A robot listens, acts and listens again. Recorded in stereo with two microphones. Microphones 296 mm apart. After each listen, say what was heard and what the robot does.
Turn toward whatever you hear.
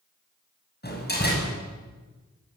The door slam: about 35° left or 145° left. Turn 35° left.
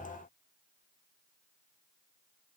Keep listening.
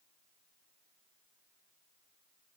I heard a door slam, but can't make it out now. It was about straight ahead or 110° left.